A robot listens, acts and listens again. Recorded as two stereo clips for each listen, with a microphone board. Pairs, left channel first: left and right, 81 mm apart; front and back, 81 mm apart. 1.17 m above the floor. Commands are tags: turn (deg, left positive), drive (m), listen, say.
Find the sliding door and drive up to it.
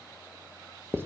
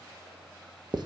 <listen/>
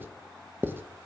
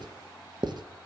<listen/>
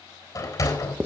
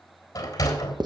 <turn deg="45"/>
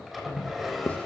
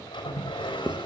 <drive m="1.0"/>
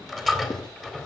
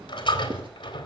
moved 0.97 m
<drive m="1.0"/>
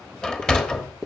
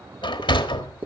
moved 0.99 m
<turn deg="10"/>
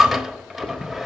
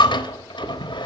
<drive m="1.0"/>
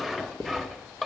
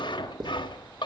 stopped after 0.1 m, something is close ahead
<say>I am next to the sliding door.</say>